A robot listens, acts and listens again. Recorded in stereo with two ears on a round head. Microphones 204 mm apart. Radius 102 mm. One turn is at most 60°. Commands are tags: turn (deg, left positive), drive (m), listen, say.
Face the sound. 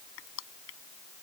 <turn deg="60"/>
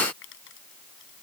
<turn deg="55"/>
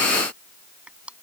<say>Facing the crushing.</say>